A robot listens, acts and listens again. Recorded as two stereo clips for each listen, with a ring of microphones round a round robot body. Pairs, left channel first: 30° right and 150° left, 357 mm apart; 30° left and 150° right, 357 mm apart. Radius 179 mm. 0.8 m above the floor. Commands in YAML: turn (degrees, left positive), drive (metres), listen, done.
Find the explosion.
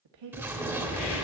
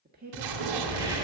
turn: -125
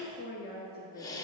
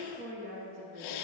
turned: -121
done: "Facing where the explosion came from. I can't hear it now."